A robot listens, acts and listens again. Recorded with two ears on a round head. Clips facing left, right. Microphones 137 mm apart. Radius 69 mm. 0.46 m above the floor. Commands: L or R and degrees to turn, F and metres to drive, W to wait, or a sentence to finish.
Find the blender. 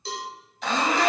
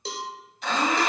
L65
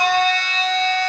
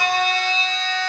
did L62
L45
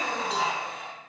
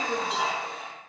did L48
Found it: a blender, straight ahead.